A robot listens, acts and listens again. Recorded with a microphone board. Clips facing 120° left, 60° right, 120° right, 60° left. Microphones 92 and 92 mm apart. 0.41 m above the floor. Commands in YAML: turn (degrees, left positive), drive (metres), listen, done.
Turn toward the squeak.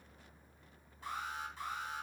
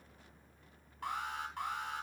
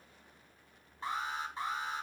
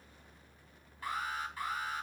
listen: true
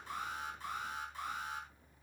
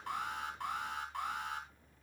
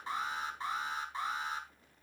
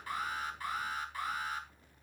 listen: true
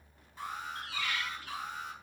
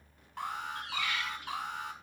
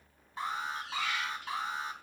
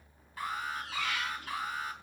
turn: 10
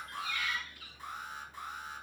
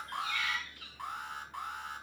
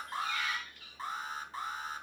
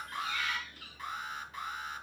done: "Found it: a squeak, straight ahead, over 4 m away."